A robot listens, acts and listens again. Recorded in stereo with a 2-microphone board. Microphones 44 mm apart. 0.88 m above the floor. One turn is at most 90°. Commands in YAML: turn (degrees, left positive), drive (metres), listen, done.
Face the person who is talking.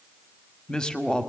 turn: 15
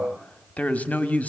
turn: 90
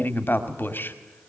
turn: 50
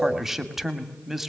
done: "Found it: a woman speaking, straight ahead."